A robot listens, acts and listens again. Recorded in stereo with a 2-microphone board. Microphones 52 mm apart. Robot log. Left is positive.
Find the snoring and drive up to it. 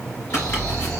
note: The snoring: about 25° left or 155° left.
cmd yaw +25
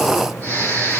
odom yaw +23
note: So it is at 130° left.
cmd yaw +130
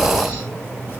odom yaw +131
cmd fwd 1.0
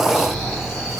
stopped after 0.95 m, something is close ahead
note: The snoring is now 15° right.
cmd yaw -15
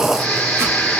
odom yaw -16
end: I am next to the snoring.